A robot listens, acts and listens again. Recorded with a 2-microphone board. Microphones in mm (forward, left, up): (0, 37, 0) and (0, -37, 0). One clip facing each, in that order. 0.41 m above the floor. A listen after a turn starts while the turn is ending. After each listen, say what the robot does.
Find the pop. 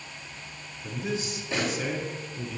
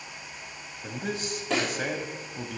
Turn 90° right.
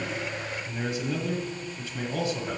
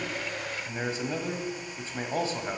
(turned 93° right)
Facing where the pop came from. I can't hear it now.